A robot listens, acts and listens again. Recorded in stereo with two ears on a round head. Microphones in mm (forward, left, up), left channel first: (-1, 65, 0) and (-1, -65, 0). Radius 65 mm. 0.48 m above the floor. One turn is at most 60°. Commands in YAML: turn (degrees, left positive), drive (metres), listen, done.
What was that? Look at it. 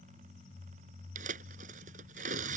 turn: -60
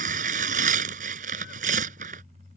turn: -60
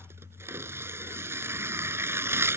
turn: -20
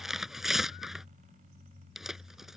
done: "Found it: tearing paper, straight ahead."